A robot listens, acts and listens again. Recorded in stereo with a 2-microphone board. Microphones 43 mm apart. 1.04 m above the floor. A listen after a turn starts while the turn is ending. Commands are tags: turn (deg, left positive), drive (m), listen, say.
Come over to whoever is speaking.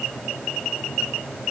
<listen/>
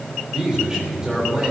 <turn deg="-20"/>
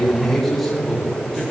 <drive m="1.0"/>
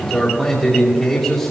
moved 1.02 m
<turn deg="10"/>
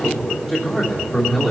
<drive m="1.0"/>
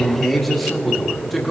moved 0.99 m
<drive m="1.0"/>
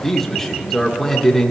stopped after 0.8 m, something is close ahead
<turn deg="10"/>
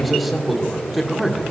<say>Arrived at the man speaking, straight ahead.</say>